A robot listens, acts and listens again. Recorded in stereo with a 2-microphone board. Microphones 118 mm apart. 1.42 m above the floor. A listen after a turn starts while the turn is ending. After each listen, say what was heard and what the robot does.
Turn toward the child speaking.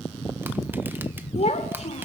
The child speaking: about 65° left or 115° left. Turn 65° left.
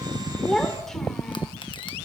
Found it: a child speaking, straight ahead, 2 to 4 m away.